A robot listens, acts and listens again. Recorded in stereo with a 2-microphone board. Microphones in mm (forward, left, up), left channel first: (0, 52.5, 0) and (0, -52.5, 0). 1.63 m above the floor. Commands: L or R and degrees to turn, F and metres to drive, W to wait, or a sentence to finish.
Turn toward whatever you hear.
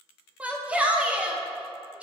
R30
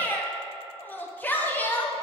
L20
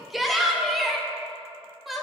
Found it: a shout, straight ahead, under 1 m away.